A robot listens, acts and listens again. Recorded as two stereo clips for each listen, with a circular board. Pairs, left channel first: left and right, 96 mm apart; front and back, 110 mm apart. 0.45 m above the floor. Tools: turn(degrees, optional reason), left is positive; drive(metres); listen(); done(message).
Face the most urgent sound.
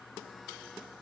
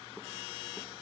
listen()
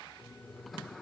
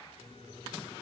listen()
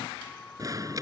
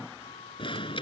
turn(degrees=-40, reason="The alarm: 40° right.")
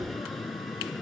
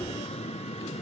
done("Found it: an alarm, straight ahead.")